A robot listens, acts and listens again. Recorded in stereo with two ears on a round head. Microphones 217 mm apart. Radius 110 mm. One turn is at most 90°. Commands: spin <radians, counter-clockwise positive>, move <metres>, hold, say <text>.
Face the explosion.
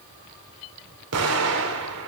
spin -1.13
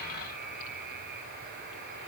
hold
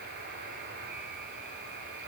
say I heard an explosion, but can't make it out now. It was about straight ahead or 50° right.